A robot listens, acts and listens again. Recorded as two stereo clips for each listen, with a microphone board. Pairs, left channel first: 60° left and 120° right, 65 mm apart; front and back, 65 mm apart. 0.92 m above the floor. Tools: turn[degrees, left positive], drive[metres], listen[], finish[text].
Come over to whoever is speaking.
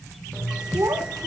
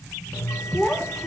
Thought: The child speaking: 90° right.
Action: turn[-90]
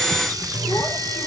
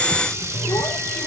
Action: listen[]
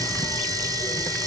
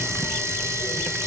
Action: listen[]
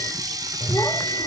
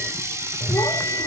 Action: finish[I heard a child speaking from this way, but can't make it out now. I did not reach it.]